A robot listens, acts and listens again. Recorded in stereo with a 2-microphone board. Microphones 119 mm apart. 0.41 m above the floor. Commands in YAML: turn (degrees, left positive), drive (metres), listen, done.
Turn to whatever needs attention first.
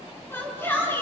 turn: 20
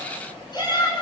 turn: 140
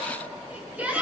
turn: -15
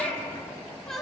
done: "Found it: a shout, straight ahead, over 4 m away."